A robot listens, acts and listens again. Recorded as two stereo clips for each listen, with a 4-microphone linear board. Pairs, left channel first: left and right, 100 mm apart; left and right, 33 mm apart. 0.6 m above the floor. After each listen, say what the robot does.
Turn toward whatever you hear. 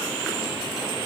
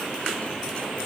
Keep listening.
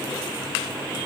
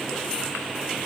Keep listening.
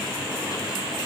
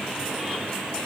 I can't make out anything to turn to.